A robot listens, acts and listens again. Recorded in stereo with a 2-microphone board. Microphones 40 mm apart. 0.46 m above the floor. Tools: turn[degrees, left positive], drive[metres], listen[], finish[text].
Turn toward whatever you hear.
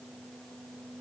Action: listen[]
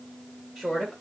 Thought: The woman speaking: about 20° right or 160° right.
Action: turn[-20]
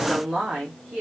Thought: The woman speaking: about 40° right or 140° right.
Action: turn[-40]
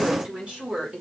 Thought: The woman speaking: about 25° right or 155° right.
Action: turn[-25]
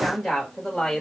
Action: finish[Found it: a woman speaking, straight ahead.]